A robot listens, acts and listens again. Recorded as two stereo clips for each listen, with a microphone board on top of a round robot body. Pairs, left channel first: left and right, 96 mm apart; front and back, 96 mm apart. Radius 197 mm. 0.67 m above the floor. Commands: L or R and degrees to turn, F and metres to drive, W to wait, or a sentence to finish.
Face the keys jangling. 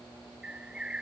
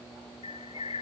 W
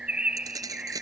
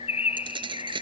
R145
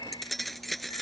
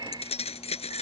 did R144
Facing the keys jangling.